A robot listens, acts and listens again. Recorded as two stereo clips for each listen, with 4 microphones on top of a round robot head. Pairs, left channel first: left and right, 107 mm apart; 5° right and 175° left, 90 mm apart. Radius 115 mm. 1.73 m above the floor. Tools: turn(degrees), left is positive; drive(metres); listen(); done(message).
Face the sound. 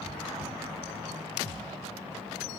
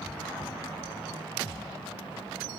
listen()
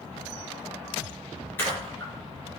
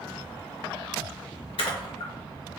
turn(degrees=15)
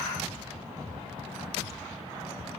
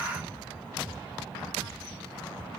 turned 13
done("I heard a splash from this way, but can't make it out now.")